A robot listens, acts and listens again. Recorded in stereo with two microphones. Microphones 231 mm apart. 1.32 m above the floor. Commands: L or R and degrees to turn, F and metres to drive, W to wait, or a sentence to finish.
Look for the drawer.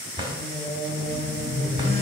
R20
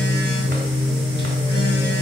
W
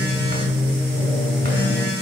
W
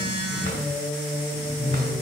I heard a drawer, but can't make it out now. It was about straight ahead or 140° right.